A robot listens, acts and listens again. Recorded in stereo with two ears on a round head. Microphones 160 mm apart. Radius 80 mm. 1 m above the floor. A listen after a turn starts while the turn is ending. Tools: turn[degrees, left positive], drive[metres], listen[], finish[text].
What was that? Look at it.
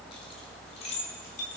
Thought: The keys jangling: about 40° left or 140° left.
Action: turn[40]
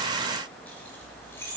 Thought: So it is at 15° left.
Action: turn[15]
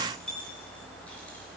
Action: finish[Facing the keys jangling, 2 to 4 m away.]